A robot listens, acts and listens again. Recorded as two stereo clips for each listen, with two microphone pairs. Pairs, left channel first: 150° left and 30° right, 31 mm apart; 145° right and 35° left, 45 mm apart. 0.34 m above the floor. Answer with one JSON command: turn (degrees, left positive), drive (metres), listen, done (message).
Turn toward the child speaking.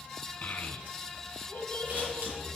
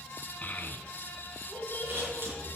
{"turn": -175}
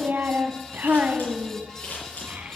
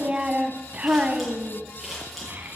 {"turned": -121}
{"done": "Facing the child speaking."}